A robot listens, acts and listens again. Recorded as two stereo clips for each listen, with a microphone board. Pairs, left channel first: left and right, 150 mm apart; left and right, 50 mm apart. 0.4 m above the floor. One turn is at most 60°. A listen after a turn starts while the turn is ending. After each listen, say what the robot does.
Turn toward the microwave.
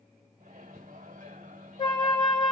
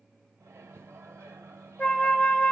Turn 55° right.
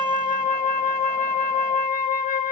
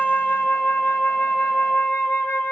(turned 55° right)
Keep listening.
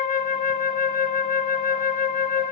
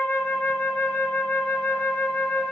Keep listening.
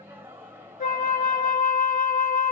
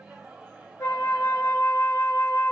Turn 15° right.
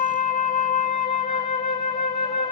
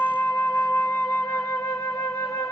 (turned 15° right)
Keep listening.
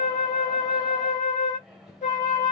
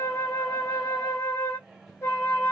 Facing the microwave, 1 to 2 m away.